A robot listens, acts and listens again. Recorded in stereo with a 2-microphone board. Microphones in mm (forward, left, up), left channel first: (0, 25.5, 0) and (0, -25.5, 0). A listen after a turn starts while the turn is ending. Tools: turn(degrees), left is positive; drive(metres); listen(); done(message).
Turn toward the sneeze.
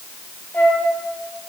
listen()
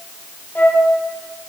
listen()
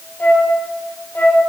done("I can't make out a sneeze to turn to.")